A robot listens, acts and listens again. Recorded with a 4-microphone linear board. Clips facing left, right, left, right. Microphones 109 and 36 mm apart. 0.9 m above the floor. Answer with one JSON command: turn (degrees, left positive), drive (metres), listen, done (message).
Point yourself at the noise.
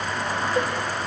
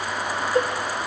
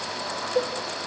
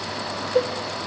{"turn": -45}
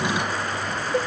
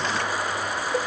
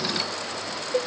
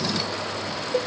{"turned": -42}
{"done": "Facing the cowbell, 1 to 2 m away."}